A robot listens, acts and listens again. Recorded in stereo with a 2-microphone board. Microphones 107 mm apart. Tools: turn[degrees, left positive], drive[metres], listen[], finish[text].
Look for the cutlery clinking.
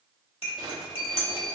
Thought: The cutlery clinking: about 65° left or 115° left.
Action: turn[65]
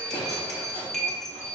Action: finish[Found it: cutlery clinking, straight ahead.]